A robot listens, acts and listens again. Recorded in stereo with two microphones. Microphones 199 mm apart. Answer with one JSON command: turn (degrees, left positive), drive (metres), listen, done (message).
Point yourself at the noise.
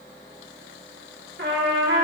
{"turn": -70}
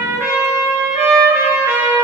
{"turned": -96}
{"turn": -10}
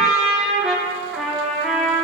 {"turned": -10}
{"done": "Found it: a trumpet, straight ahead."}